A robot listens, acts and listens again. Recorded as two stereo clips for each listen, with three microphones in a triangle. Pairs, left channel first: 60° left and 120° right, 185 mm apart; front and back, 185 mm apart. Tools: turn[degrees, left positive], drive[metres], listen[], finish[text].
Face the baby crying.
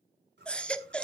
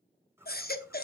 Thought: The baby crying: 25° right.
Action: turn[-25]
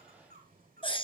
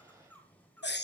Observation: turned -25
Action: finish[Facing the baby crying, under 1 m away.]